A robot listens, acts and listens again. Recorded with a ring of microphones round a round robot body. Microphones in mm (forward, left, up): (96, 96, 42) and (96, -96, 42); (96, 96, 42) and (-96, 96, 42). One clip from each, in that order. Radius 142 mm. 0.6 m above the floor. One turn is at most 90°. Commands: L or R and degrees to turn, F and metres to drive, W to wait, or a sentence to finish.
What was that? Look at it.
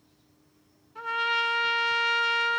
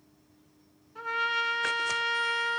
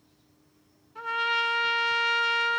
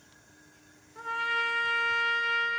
L15
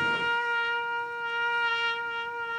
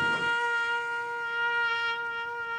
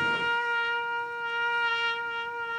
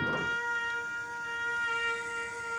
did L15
Facing the trumpet, 1 to 2 m away.